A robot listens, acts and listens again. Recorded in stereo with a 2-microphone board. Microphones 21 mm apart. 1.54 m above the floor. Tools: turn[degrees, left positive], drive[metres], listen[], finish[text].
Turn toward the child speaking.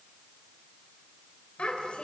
Thought: The child speaking: about 75° left or 105° left.
Action: turn[75]
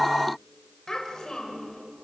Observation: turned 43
Thought: So it is at 35° left.
Action: turn[35]
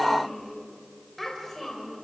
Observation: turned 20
Thought: The child speaking is now 15° left.
Action: turn[15]
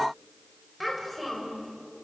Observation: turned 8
Action: finish[Facing the child speaking, over 4 m away.]